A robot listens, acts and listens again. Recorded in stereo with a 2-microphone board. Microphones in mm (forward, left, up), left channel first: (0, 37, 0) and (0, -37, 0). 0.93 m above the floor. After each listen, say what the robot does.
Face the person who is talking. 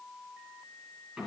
Keep listening.
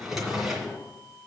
Keep listening.
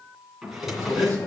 Turn 50° left.
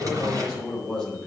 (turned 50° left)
Turn 10° left.
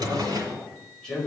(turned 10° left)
Turn 10° left.
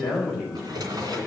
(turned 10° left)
Facing the man speaking.